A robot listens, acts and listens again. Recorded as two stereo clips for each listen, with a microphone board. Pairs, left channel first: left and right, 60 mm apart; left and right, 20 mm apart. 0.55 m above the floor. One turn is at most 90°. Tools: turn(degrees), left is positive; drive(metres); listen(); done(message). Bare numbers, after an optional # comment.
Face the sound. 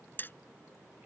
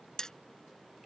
# The hammering: about 35° left or 145° left.
turn(35)
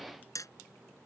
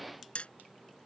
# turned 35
# So it is at 110° left.
turn(90)
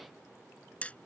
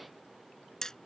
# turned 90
# The hammering is now 25° left.
turn(25)
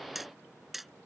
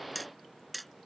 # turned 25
done("Facing the hammering.")